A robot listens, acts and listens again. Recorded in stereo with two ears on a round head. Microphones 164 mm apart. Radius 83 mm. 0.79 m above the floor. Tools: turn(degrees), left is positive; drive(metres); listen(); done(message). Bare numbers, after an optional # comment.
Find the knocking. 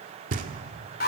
# The knocking: about 45° right or 135° right.
turn(-45)
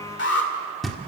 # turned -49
done("Facing the knocking, 1 to 2 m away.")